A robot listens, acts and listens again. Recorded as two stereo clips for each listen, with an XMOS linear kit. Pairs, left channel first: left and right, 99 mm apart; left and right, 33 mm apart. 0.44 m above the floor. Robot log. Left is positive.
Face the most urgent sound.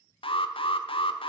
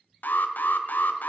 note: The alarm: about 65° left or 115° left.
cmd yaw +65
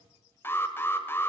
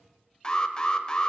note: So it is at 25° left.
cmd yaw +25
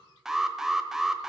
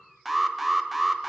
end: Found it: an alarm, straight ahead.